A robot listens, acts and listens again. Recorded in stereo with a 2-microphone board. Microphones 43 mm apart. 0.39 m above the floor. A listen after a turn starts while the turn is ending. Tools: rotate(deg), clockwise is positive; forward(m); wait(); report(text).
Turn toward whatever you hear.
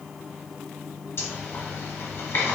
rotate(-65)
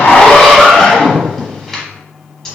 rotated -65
rotate(-10)
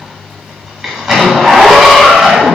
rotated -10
report("Found it: a zipper, straight ahead, under 1 m away.")